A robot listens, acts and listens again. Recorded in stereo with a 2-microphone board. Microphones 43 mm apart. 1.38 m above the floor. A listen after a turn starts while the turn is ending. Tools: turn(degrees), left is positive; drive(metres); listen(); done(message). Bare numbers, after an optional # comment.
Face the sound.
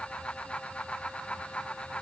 listen()
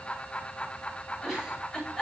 turn(30)
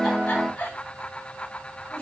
# So it is at 145° left.
turn(145)
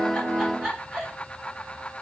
done("Found it: a giggle, straight ahead.")